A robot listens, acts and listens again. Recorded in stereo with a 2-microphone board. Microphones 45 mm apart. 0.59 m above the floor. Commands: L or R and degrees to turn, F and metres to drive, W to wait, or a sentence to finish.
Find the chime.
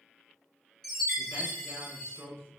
L30
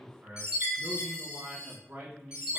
R15
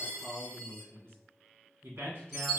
Found it: a chime, straight ahead, 1 to 2 m away.